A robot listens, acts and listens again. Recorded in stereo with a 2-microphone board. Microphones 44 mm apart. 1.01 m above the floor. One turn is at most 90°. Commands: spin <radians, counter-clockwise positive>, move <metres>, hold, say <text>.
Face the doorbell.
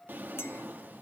hold
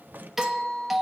spin -0.52
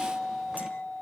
spin 0.44
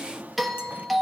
say Facing the doorbell.